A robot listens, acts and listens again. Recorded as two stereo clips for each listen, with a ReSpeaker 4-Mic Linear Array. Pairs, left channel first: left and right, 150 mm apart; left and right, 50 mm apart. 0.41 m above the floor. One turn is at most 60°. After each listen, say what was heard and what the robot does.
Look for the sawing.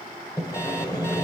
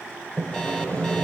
The sawing: about 25° left or 155° left. Turn 25° left.
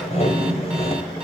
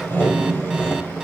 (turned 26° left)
So it is at 125° left. Turn 60° left.
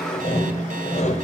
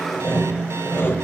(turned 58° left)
The sawing is now 65° left. Turn 60° left.
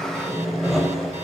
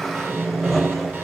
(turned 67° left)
Found it: sawing, straight ahead, 2 to 4 m away.